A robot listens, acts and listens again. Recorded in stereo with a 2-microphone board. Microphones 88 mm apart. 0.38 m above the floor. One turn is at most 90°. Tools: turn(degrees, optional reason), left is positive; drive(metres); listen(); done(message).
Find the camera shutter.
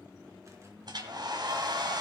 listen()
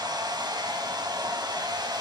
listen()
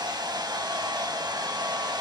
done("I can't make out a camera shutter, only a hair dryer.")